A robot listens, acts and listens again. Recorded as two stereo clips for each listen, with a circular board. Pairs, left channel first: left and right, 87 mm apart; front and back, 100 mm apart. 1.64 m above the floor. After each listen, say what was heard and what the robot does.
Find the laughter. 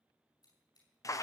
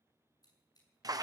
Keep listening.
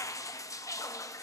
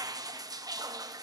Keep listening.
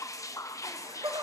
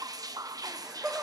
The laughter: 100° right. Turn 100° right.
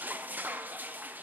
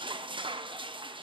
Keep listening.
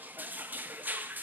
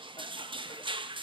Keep listening.
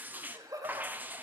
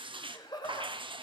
The laughter is now 45° right. Turn 45° right.
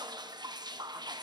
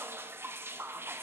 Keep listening.
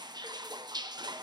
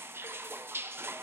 Keep listening.
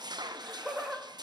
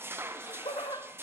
Facing the laughter.